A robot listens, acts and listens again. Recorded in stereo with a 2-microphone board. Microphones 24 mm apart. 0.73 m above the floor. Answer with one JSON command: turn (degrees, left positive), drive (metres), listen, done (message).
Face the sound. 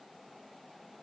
{"listen": true}
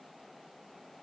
{"listen": true}
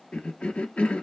{"turn": 65}
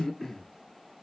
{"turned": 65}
{"turn": 20}
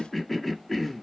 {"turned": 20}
{"done": "Facing the cough."}